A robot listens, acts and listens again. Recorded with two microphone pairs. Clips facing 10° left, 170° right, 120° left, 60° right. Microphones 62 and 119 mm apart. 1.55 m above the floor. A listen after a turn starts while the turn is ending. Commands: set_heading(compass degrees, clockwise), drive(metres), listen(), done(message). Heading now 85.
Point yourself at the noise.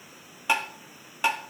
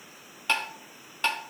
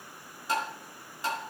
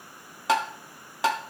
set_heading(150)
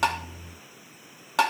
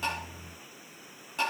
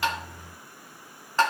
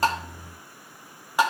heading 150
set_heading(130)
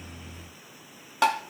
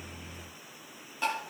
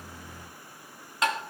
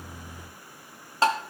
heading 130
done("Facing the tapping, under 1 m away.")